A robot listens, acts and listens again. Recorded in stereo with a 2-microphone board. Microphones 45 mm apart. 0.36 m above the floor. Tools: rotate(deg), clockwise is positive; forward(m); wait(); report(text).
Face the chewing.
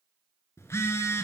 wait()
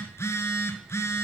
wait()
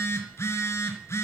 report("I can't make out chewing to turn to.")